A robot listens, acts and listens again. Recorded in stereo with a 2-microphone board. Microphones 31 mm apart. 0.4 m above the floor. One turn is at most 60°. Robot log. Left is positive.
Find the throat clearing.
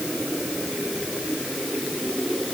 cmd idle
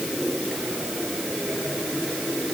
cmd idle
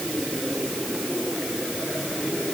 end: I can't make out throat clearing.